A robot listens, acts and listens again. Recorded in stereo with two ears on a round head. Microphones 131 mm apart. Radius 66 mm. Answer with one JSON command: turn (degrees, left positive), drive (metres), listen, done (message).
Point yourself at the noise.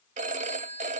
{"turn": -55}
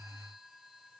{"listen": true}
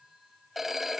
{"done": "Found it: a phone ringing, straight ahead."}